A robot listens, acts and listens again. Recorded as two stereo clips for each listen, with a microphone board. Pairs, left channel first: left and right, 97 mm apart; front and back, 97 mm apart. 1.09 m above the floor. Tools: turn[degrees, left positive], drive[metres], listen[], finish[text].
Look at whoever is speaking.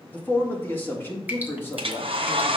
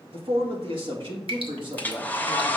Thought: The man speaking: 155° left.
Action: turn[155]
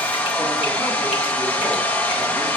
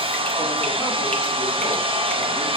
Action: listen[]
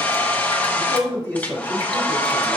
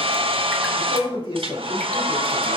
Thought: The man speaking is now 20° left.
Action: turn[20]
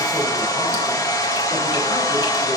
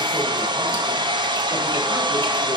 Action: listen[]
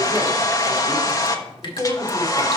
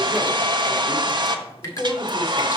Action: finish[Found it: a man speaking, straight ahead, 2 to 4 m away.]